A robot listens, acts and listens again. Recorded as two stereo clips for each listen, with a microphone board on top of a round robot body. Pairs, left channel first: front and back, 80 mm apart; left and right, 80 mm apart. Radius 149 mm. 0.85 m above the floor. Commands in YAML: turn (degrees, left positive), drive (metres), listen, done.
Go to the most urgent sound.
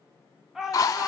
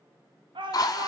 turn: -95
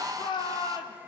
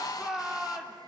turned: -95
drive: 1.0
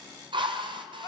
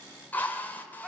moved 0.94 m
drive: 1.0
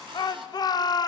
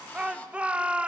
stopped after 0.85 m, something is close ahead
turn: -15
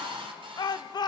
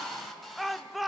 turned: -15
done: "I am next to the shout."